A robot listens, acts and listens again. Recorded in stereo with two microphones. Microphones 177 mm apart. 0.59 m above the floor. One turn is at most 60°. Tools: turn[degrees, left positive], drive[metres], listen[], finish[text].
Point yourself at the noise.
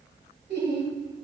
Action: turn[-60]
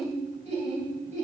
Thought: So it is at 45° right.
Action: turn[-45]
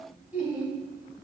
Thought: The laughter is now 10° right.
Action: turn[-10]
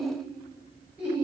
Thought: The laughter is now 10° right.
Action: turn[-10]
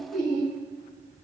Action: finish[Facing the laughter, over 4 m away.]